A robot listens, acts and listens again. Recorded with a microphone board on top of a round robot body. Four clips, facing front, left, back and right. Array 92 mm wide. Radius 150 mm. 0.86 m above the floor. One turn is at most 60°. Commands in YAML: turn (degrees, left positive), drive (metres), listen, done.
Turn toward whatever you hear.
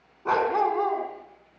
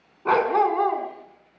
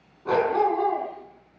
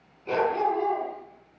turn: 60
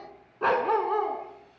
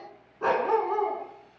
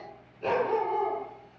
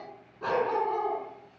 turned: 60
turn: 25
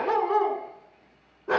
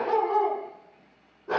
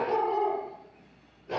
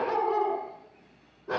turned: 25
done: "Facing the dog barking."